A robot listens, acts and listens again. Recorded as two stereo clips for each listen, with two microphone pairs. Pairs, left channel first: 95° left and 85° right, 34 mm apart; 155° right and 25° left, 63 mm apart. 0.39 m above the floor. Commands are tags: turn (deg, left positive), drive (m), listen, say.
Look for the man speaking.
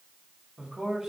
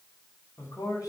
<turn deg="-155"/>
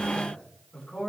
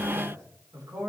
<turn deg="35"/>
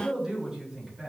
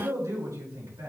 <say>Found it: a man speaking, straight ahead, over 4 m away.</say>